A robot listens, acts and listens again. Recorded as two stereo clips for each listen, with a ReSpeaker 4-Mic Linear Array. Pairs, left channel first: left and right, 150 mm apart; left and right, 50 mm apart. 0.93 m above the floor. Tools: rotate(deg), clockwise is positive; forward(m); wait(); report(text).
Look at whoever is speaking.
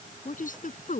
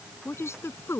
rotate(-65)
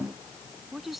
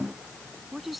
report("Found it: a woman speaking, straight ahead.")